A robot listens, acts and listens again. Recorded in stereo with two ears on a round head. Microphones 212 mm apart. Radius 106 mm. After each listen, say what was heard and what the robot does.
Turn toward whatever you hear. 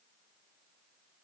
Keep listening.
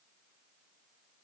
Keep listening.
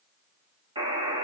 The buzzer: about 20° right or 160° right. Turn 20° right.
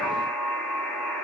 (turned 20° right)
Facing the buzzer, 2 to 4 m away.